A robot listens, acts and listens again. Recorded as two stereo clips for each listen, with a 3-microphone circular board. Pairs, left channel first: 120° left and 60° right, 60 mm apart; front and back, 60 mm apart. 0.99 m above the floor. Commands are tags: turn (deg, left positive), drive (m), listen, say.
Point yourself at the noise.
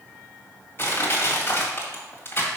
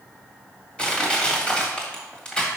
<turn deg="70"/>
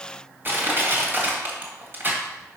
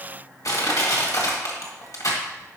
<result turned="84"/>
<turn deg="-10"/>
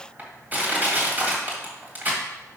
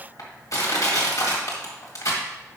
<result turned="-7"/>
<say>Found it: crushing, straight ahead.</say>